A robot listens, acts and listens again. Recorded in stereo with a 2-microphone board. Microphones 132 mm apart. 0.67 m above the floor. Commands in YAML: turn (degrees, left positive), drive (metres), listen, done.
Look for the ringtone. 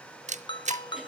turn: 40
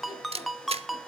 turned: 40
done: "Found it: a ringtone, straight ahead, under 1 m away."